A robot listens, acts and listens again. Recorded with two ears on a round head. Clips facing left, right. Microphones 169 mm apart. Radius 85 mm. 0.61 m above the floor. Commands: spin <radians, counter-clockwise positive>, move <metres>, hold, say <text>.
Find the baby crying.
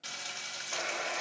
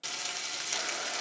hold
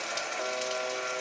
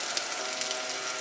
hold
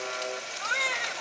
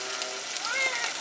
spin 0.52
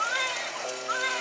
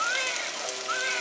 spin -0.52
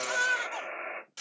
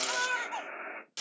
spin 0.26
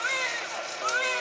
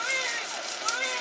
say Facing the baby crying, 1 to 2 m away.